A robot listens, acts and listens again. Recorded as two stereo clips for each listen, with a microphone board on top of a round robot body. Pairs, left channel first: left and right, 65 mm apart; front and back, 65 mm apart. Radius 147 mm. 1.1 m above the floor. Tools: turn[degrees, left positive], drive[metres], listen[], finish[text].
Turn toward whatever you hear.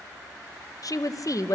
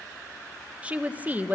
Thought: The woman speaking: 120° left.
Action: turn[120]
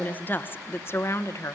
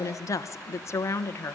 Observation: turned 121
Thought: The woman speaking is now 50° left.
Action: turn[50]
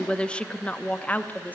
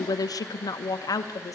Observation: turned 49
Thought: The woman speaking is now 25° left.
Action: turn[25]
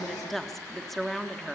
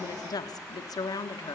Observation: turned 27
Action: finish[Facing the woman speaking, 1 to 2 m away.]